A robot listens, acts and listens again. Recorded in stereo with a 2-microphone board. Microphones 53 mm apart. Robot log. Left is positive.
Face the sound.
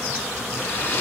note: The hair dryer: about 40° left or 140° left.
cmd yaw +40
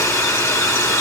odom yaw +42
note: So it is at 95° left.
cmd yaw +95
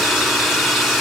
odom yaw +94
end: Found it: a hair dryer, straight ahead, 1 to 2 m away.